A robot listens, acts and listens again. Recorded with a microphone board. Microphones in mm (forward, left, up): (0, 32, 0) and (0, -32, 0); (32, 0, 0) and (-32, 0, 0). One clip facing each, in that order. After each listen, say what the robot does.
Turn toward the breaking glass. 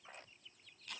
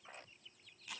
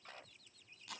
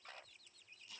Keep listening.
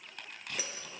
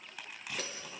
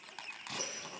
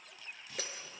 Turn 175° left.
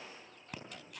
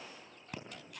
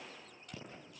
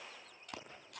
I heard breaking glass from this way, but can't make it out now.